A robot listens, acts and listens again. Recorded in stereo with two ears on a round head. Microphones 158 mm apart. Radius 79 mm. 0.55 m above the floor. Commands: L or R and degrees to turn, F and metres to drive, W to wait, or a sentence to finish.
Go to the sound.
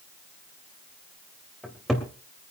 L30
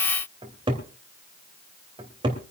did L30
R30
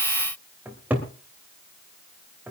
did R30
R10
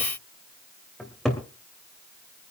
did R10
F1.0
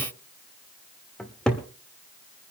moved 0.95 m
F1.0
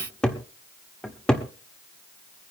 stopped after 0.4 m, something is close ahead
I am next to the cupboard door.